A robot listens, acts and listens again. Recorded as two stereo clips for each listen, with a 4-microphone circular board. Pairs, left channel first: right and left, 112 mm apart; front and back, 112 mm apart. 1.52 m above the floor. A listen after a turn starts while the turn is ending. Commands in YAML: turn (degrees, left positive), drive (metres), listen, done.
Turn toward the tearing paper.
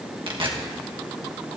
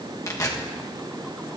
turn: 60
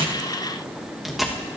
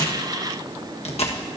done: "Found it: tearing paper, straight ahead, 1 to 2 m away."